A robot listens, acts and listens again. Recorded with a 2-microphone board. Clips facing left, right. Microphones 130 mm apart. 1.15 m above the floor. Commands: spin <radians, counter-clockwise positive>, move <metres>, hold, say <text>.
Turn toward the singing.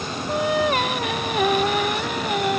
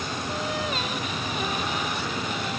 spin 1.22
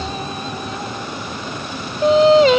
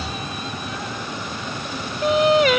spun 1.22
spin 0.52
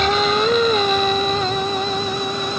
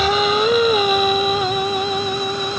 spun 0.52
say Found it: singing, straight ahead.